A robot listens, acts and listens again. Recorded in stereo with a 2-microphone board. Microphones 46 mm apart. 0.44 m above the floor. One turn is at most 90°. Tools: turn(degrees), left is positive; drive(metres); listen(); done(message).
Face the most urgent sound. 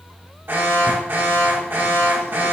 turn(degrees=-55)
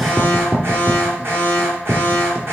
turn(degrees=-65)
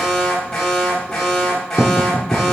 turn(degrees=10)
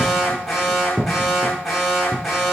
done("Found it: an alarm, straight ahead.")